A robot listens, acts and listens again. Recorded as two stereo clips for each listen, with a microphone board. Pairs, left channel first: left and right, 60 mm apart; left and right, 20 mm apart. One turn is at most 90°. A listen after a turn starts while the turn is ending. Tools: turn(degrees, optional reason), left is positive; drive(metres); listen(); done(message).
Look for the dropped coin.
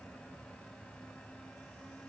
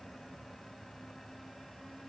listen()
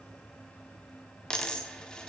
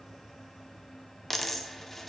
turn(degrees=30)
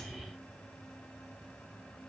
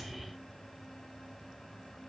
listen()
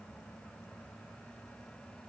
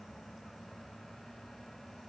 done("I heard a dropped coin, but can't make it out now. It was about 15° right or 135° left.")